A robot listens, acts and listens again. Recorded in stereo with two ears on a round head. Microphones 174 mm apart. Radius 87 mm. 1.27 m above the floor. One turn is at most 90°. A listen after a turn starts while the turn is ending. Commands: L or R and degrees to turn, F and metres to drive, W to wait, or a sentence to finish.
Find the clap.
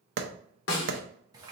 R60
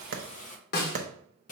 R45
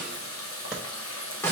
W
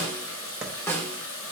W
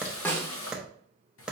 Found it: a clap, straight ahead.